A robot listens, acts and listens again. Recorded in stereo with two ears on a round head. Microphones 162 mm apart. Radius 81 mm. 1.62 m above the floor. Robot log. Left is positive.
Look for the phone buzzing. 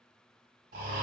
cmd idle
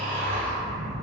cmd yaw -90
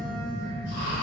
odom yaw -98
end: Found it: a phone buzzing, straight ahead.